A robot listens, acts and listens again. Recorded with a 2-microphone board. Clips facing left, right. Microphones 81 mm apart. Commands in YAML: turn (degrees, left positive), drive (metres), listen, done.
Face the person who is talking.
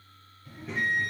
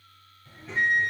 turn: 30
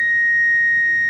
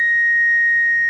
listen: true
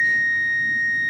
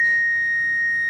listen: true
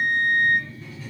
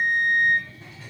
turn: -25
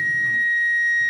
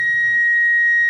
listen: true
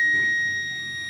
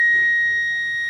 listen: true
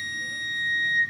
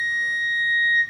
done: "Facing where the child speaking came from. I can't hear it now."